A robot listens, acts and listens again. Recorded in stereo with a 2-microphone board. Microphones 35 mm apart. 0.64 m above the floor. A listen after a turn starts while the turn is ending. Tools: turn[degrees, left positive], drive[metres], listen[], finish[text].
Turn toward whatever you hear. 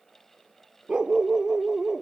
Thought: The dog barking: about 15° right or 165° right.
Action: turn[-15]
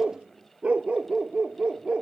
Thought: The dog barking: about 25° right or 155° right.
Action: turn[-25]
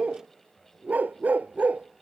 Thought: So it is at 135° right.
Action: turn[-135]
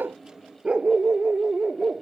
Thought: The dog barking is now 35° right.
Action: turn[-35]
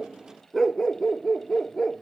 Action: finish[Facing the dog barking.]